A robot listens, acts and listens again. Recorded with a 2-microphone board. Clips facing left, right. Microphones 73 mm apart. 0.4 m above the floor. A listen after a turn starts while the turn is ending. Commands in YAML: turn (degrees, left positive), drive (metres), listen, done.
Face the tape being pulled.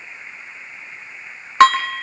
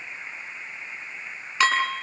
listen: true
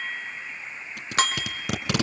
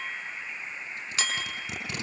turn: 90
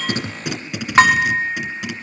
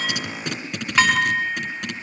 done: "Facing the tape being pulled."